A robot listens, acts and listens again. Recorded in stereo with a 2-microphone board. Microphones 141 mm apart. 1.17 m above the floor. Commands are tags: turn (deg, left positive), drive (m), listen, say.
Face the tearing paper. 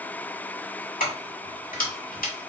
<listen/>
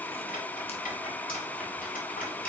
<listen/>
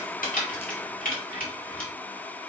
<say>I can't make out tearing paper, only keys jangling.</say>